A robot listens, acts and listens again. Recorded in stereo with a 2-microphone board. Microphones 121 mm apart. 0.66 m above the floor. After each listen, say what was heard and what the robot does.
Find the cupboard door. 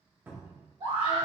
The cupboard door: about 15° right or 165° right. Turn 15° right.
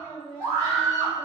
Keep listening.
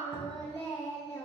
Keep listening.
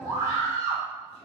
I heard a cupboard door, but can't make it out now. It was about straight ahead or 150° right.